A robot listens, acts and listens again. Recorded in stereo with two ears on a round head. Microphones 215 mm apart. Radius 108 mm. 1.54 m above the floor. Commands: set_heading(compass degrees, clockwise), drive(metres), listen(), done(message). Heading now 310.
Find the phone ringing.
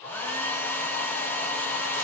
listen()
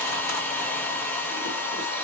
listen()
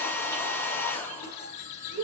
done("I can't make out a phone ringing, only a hair dryer and chewing.")